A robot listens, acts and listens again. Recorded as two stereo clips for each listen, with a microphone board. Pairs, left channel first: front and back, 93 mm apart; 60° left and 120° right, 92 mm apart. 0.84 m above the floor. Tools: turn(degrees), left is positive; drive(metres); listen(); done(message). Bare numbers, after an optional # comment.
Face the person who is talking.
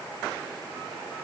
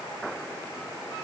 listen()
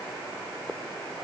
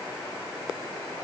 listen()
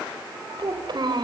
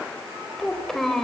# The child speaking: 145° left.
turn(145)
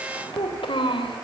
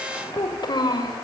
# The child speaking is now 20° left.
turn(20)
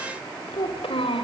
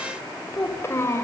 done("Facing the child speaking, 2 to 4 m away.")